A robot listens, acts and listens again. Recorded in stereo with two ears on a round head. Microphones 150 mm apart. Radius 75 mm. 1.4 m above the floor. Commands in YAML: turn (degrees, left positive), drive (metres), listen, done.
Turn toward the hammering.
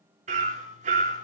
turn: -45
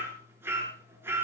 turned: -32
turn: -15
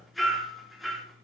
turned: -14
done: "Facing the hammering."